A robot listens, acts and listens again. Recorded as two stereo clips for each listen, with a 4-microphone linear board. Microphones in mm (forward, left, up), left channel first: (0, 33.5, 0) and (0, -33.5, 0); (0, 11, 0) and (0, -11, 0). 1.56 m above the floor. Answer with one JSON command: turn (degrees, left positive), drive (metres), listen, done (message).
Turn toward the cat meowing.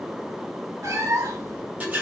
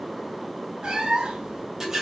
{"turn": -50}
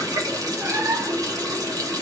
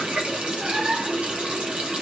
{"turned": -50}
{"turn": -35}
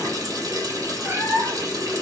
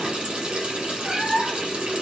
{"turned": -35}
{"turn": -40}
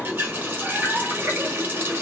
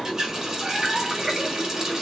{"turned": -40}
{"listen": true}
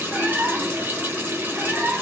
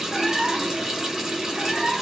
{"turn": -25}
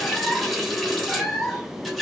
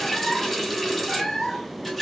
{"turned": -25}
{"done": "Facing the cat meowing, 1 to 2 m away."}